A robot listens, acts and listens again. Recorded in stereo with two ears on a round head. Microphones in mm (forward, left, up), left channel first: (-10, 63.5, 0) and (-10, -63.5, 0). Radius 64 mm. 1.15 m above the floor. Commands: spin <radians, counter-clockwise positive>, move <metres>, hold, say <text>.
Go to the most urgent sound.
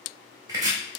hold
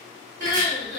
spin -1.05
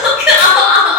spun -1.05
move 1.0
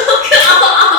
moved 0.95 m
move 1.0
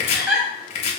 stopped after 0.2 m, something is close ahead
say I am next to the crying.